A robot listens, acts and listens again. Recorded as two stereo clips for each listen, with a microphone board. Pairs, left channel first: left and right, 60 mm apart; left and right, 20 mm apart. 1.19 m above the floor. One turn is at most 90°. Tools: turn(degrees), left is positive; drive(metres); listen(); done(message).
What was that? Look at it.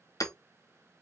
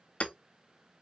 turn(degrees=90)
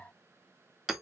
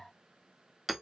turn(degrees=-10)
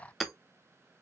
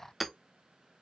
done("Found it: hammering, straight ahead, under 1 m away.")